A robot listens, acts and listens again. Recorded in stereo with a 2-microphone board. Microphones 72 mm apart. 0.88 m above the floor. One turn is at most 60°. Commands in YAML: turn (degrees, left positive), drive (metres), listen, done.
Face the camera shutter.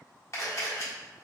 turn: 40
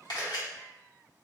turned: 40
turn: 60
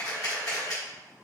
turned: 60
turn: 55
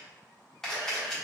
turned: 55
turn: 10
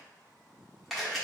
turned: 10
done: "Found it: a camera shutter, straight ahead, 1 to 2 m away."